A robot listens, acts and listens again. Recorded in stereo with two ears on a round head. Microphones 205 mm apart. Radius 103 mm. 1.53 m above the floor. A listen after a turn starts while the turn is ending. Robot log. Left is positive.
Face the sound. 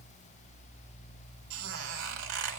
note: The squeak: about 60° right or 120° right.
cmd yaw -60
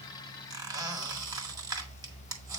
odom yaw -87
note: So it is at 20° right.
cmd yaw -20
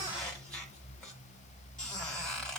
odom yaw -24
end: Facing the squeak, 1 to 2 m away.